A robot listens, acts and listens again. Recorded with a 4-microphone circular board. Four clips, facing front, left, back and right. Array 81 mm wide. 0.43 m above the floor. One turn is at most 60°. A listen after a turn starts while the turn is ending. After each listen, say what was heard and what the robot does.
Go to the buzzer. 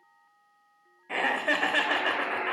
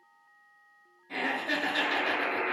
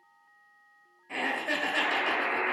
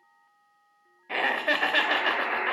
The buzzer: 135° right. Turn 60° right.
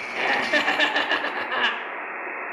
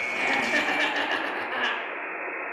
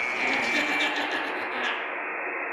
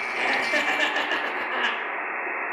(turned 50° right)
The buzzer is now 85° right. Turn 60° right.
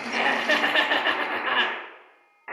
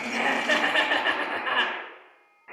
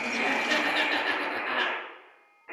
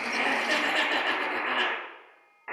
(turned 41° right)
The buzzer is now 40° right. Turn 40° right.
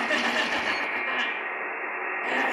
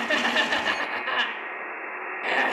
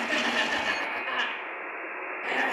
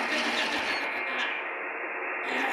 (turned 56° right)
The buzzer is now 15° left. Turn 15° left.
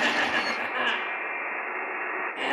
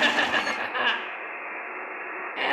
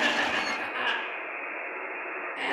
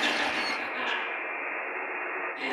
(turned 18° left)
Drive 1.0 m forward.
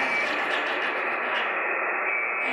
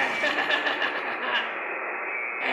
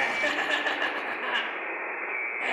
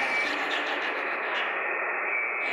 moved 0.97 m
The buzzer is now 10° right. Turn 10° right.
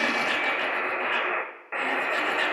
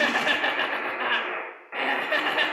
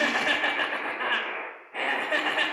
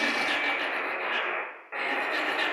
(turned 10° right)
Drive 1.0 m forward.
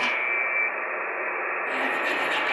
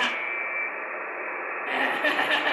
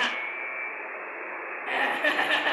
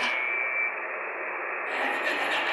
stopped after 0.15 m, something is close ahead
I am next to the buzzer.